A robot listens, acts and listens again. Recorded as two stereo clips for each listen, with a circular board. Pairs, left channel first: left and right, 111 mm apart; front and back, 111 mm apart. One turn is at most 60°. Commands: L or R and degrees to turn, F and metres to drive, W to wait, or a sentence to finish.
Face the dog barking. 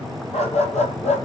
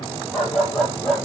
L60
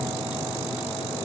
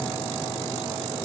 L25
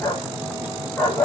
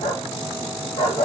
L15
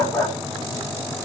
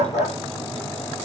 Found it: a dog barking, straight ahead.